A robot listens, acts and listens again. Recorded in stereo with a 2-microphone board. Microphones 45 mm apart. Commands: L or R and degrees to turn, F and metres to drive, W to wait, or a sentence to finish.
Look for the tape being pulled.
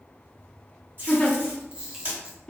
R50
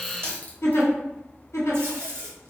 R70
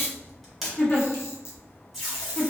Facing the tape being pulled, 1 to 2 m away.